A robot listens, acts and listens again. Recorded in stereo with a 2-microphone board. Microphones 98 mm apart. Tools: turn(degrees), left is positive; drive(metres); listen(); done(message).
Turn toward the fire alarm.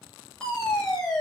turn(degrees=30)
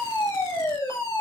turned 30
turn(degrees=145)
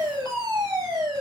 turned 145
turn(degrees=-45)
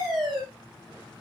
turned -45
done("Facing the fire alarm.")